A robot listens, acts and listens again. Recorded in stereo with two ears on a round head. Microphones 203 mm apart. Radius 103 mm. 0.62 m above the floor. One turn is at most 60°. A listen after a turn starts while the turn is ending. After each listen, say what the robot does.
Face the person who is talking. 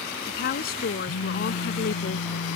Turn 40° left.
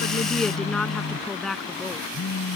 Facing the woman speaking.